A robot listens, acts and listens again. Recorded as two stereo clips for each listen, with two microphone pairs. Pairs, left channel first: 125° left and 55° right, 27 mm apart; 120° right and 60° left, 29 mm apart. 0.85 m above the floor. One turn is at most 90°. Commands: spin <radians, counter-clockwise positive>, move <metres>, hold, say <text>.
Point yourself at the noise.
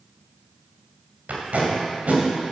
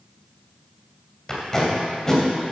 spin -0.87
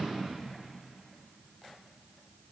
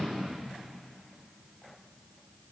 hold
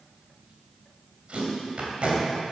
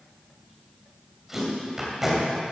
spin -0.35
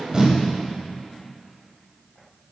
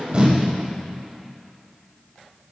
say Found it: tape being pulled, straight ahead, 2 to 4 m away.